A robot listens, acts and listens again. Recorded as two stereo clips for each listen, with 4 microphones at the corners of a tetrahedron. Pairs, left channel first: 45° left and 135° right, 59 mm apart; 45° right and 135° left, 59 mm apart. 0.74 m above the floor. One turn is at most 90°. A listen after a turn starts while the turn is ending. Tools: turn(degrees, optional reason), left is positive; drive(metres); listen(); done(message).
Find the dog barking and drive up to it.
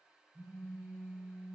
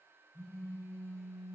listen()
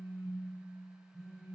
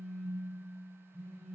listen()
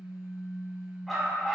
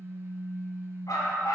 turn(degrees=-45, reason="The dog barking: 45° right.")
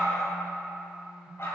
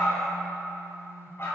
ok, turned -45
drive(metres=1.0)
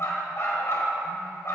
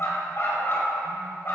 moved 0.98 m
drive(metres=1.0)
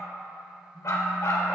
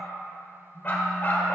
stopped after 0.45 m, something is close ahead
turn(degrees=15, reason="The dog barking is now 15° left.")
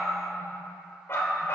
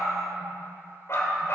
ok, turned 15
done("Arrived at the dog barking, straight ahead.")